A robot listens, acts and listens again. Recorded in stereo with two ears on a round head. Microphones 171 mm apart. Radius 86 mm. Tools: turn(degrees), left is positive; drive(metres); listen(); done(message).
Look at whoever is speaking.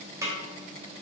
listen()
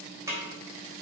listen()
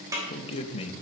turn(degrees=30)
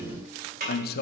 turn(degrees=115)
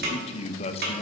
turn(degrees=35)
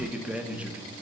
done("Found it: a man speaking, straight ahead, under 1 m away.")